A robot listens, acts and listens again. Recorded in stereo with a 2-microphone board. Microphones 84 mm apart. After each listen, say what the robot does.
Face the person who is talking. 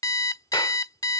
Keep listening.
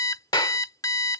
Keep listening.
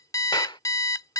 I can't make out anyone speaking to turn to.